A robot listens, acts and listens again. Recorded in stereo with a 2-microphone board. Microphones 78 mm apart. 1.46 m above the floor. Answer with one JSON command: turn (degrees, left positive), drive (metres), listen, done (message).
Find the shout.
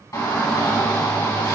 {"turn": 50}
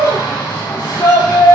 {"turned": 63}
{"turn": 65}
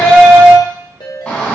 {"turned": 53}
{"turn": 10}
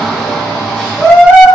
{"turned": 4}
{"done": "Facing the shout, 1 to 2 m away."}